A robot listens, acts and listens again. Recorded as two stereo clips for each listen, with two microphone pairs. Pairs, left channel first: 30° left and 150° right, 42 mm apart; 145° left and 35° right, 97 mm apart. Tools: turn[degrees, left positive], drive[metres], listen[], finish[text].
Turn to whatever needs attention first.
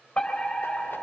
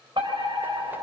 Thought: The fire alarm: 35° right.
Action: turn[-35]
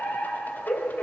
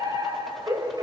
Thought: The fire alarm is now 10° right.
Action: turn[-10]
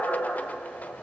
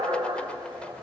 Action: finish[Facing the fire alarm, 2 to 4 m away.]